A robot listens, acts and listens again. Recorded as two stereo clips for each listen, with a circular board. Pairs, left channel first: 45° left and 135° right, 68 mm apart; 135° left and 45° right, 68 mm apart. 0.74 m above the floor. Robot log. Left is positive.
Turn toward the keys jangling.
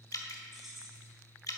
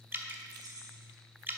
note: The keys jangling: 45° right.
cmd yaw -45
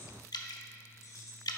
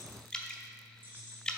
note: The keys jangling is now 15° left.
cmd yaw +15
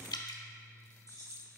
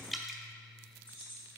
note: The keys jangling is now 10° left.
cmd yaw +10
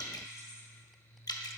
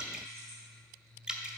cmd idle
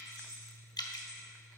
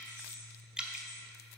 note: The keys jangling is now 10° left.
cmd yaw +10
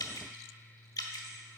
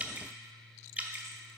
cmd idle
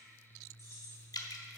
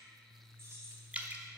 end: Found it: keys jangling, straight ahead.